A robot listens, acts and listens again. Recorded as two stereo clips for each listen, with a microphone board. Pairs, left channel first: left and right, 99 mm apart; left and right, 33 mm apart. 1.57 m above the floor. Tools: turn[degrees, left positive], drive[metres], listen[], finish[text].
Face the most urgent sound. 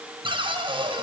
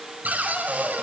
Action: listen[]
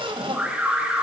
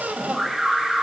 Action: turn[-30]
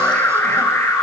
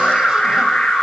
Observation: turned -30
Thought: So it is at 25° left.
Action: turn[25]
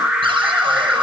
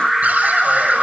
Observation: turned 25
Thought: The alarm is now 10° right.
Action: turn[-10]
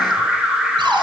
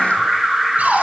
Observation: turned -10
Action: finish[Found it: an alarm, straight ahead, over 4 m away.]